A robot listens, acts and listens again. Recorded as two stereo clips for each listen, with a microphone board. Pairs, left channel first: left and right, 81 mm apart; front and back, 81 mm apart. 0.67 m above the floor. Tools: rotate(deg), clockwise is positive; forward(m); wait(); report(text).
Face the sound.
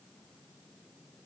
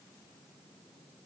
wait()
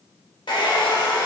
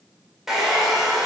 rotate(-95)
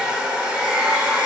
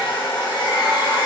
rotate(10)
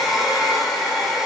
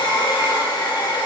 report("Found it: a hair dryer, straight ahead.")